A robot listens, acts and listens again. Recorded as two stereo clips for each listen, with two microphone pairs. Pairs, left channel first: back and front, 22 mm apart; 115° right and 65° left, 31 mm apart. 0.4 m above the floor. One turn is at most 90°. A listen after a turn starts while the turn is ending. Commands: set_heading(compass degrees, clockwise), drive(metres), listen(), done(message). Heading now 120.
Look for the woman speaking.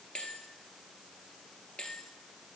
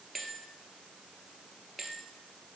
listen()
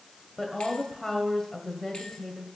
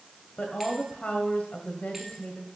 set_heading(210)
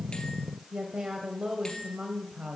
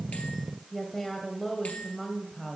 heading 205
set_heading(240)
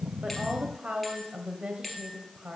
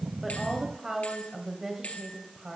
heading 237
done("Found it: a woman speaking, straight ahead, 1 to 2 m away.")